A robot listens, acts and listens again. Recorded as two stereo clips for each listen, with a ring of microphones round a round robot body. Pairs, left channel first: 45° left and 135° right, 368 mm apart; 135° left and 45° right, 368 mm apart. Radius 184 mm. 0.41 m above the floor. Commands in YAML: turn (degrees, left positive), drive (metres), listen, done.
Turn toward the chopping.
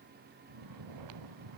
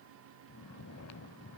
listen: true
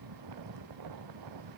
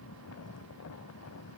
listen: true
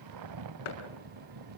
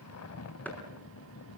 turn: 50
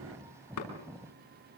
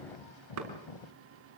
listen: true
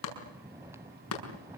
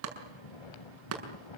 done: "Found it: chopping, straight ahead, over 4 m away."